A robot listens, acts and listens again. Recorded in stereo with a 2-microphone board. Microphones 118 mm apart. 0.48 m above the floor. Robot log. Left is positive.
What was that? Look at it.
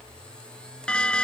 cmd yaw +30
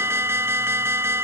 note: So it is at 20° right.
cmd yaw -20
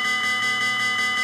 end: Facing the alarm.